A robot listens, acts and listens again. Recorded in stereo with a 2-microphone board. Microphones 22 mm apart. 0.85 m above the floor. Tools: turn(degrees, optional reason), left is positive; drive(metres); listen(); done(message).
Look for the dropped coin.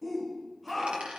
turn(degrees=-55, reason="The dropped coin: about 55° right or 125° right.")
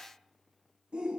listen()
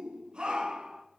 done("I heard a dropped coin, but can't make it out now. It was about straight ahead or 70° right.")